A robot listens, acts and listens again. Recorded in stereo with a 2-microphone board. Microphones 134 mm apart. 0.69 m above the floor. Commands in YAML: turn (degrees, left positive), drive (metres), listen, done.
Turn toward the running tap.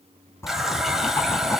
turn: 30
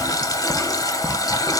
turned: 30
turn: 150
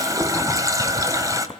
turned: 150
turn: -25
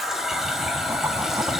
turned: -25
done: "Facing the running tap, 2 to 4 m away."